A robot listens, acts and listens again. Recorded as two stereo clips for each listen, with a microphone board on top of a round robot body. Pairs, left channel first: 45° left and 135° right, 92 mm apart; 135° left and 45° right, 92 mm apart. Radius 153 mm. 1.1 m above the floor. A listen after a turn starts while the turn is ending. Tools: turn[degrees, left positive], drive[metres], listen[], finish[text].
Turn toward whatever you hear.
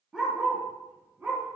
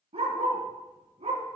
Thought: The dog barking: 60° right.
Action: turn[-60]
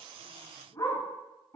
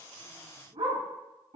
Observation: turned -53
Thought: The dog barking is now 20° right.
Action: turn[-20]
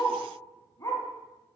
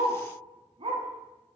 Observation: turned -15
Thought: The dog barking is now 15° right.
Action: turn[-15]
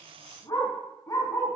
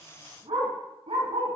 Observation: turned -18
Thought: The dog barking is now 20° right.
Action: turn[-20]
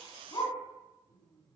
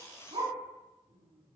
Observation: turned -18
Thought: The dog barking is now 10° right.
Action: turn[-10]
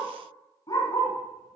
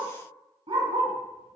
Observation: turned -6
Action: finish[Found it: a dog barking, straight ahead, 2 to 4 m away.]